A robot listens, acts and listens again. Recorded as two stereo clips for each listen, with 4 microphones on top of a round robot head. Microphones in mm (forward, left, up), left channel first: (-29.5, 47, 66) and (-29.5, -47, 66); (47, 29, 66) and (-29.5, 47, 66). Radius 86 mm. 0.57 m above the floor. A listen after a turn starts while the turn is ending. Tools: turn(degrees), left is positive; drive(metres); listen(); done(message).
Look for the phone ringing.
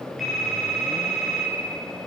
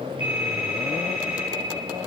turn(degrees=180)
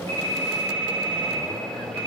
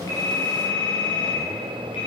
turn(degrees=-15)
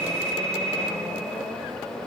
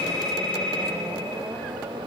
done("Found it: a phone ringing, straight ahead.")